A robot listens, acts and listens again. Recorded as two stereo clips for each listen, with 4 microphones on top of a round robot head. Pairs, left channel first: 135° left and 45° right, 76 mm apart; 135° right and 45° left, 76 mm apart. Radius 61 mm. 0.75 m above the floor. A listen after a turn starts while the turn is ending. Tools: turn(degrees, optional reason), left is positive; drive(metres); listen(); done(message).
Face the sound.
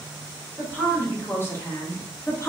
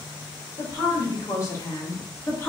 turn(degrees=175, reason="The woman speaking: 175° left.")
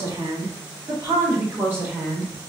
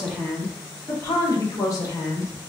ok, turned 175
turn(degrees=-105, reason="The woman speaking is now 105° right.")
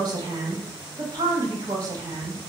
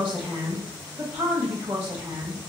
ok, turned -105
done("Found it: a woman speaking, straight ahead, 1 to 2 m away.")